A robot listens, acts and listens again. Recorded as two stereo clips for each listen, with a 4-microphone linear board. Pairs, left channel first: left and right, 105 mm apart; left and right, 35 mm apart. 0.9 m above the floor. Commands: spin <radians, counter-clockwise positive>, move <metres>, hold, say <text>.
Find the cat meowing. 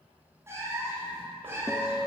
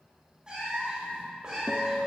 spin -0.35
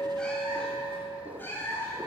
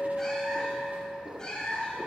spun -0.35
spin 0.44
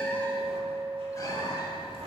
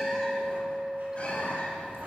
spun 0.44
hold
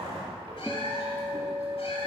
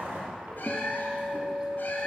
spin 1.13
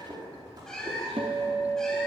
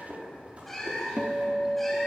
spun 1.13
say Found it: a cat meowing, straight ahead, 1 to 2 m away.